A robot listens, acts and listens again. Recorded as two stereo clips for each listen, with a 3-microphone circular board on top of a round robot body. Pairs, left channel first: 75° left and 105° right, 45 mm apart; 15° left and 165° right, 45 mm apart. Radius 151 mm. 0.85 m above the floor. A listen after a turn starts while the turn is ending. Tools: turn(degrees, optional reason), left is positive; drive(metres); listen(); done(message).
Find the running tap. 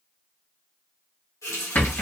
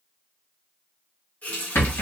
turn(degrees=75, reason="The running tap: 75° left.")
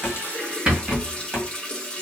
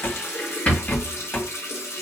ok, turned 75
done("Found it: a running tap, straight ahead, 1 to 2 m away.")